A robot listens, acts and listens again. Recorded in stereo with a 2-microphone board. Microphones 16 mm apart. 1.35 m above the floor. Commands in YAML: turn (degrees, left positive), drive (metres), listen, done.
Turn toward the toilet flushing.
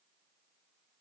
listen: true
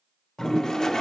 turn: 40
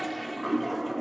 done: "Facing the toilet flushing."